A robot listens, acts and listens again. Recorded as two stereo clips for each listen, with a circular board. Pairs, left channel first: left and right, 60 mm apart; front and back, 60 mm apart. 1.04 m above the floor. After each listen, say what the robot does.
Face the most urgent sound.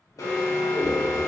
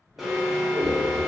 Turn 95° left.
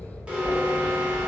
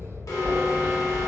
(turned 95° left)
Turn 20° right.
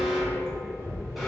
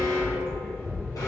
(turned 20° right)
Facing the alarm, under 1 m away.